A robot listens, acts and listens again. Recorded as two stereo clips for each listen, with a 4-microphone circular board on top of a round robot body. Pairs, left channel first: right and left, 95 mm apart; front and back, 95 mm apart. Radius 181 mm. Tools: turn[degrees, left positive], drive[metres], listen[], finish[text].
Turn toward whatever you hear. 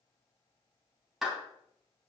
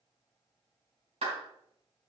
Thought: The clap: 175° left.
Action: turn[175]
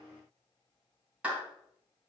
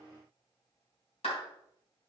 Thought: The clap is now 15° left.
Action: turn[15]
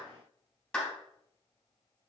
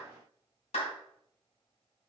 Thought: The clap is now 10° right.
Action: turn[-10]
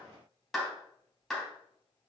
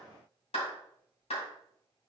Action: finish[Facing the clap.]